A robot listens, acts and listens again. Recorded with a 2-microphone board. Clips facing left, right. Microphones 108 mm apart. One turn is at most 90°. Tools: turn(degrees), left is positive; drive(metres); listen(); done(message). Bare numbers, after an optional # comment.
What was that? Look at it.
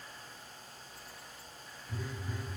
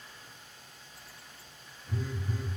# The phone buzzing: about 25° right or 155° right.
turn(-25)
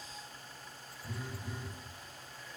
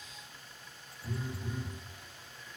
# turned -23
# So it is at 130° right.
turn(-90)
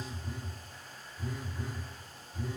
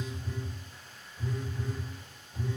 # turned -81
# The phone buzzing is now 50° right.
turn(-50)
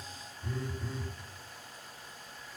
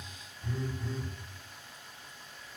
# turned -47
done("Facing the phone buzzing, 1 to 2 m away.")